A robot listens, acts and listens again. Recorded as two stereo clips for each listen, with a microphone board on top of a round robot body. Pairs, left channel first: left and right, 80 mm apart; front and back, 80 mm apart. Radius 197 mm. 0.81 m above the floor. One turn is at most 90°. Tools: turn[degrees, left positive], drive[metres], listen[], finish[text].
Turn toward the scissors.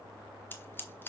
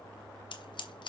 Thought: The scissors: 25° left.
Action: turn[25]
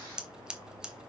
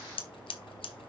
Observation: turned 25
Thought: The scissors is now 10° right.
Action: turn[-10]
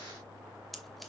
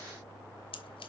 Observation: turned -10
Action: listen[]
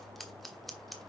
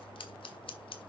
Action: finish[Facing the scissors.]